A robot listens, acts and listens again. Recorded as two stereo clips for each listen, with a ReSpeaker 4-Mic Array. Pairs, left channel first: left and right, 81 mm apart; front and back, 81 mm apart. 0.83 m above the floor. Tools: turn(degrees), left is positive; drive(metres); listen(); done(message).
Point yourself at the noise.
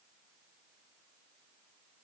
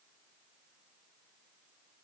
listen()
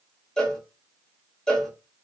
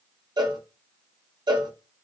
turn(degrees=170)
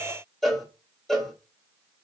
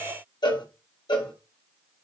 done("Found it: a cowbell, straight ahead.")